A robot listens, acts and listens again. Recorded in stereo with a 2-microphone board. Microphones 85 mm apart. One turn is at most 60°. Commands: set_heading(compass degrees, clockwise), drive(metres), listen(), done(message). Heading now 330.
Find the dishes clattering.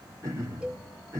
listen()
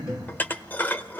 set_heading(305)
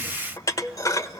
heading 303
set_heading(243)
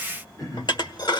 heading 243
set_heading(183)
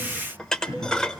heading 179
set_heading(169)
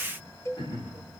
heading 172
listen()
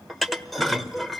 done("Facing the dishes clattering.")